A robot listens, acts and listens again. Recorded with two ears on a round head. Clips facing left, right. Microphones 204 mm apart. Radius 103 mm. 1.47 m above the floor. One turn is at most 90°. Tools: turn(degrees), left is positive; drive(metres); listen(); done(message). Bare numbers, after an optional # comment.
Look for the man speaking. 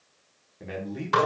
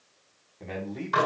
turn(30)
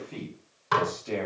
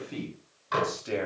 # So it is at 15° right.
turn(-15)
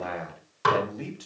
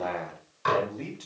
done("Found it: a man speaking, straight ahead, 2 to 4 m away.")